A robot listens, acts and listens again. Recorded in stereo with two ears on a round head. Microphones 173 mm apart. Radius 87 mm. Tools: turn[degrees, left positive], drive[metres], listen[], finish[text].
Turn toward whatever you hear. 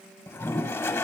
Action: turn[30]
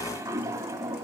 Thought: So it is at 15° right.
Action: turn[-15]
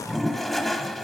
Action: finish[Facing the toilet flushing, under 1 m away.]